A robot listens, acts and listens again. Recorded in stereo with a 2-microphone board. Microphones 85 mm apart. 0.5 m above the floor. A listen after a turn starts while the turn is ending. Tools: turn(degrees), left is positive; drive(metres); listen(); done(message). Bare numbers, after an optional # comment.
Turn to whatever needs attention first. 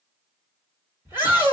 # The shout: about 25° right or 155° right.
turn(-25)
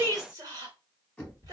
# So it is at 125° right.
turn(-125)
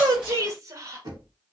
# The shout is now 50° right.
turn(-50)
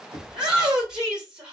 # The shout is now 10° right.
turn(-10)
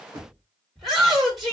done("Found it: a shout, straight ahead.")